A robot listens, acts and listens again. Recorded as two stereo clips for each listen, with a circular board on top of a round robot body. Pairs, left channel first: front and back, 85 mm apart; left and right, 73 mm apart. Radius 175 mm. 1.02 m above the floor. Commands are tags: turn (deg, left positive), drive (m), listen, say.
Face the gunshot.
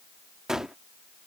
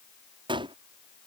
<turn deg="-95"/>
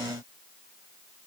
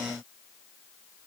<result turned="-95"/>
<say>Facing where the gunshot came from. I can't hear it now.</say>